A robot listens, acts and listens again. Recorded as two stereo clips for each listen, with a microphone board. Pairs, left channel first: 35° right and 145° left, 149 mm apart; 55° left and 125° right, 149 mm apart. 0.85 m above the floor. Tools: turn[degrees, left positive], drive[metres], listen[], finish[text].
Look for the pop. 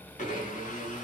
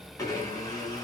Action: listen[]
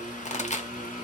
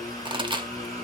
Thought: The pop: 70° right.
Action: turn[-70]
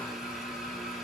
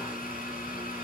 Action: finish[Facing where the pop came from. I can't hear it now.]